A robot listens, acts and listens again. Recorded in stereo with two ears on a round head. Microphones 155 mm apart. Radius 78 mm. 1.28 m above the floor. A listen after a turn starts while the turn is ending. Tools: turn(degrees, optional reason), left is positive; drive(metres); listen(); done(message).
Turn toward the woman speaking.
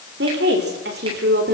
turn(degrees=-60, reason="The woman speaking: about 60° right or 120° right.")
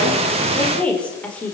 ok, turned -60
turn(degrees=10, reason="So it is at 10° left.")
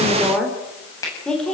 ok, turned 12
done("Found it: a woman speaking, straight ahead, over 4 m away.")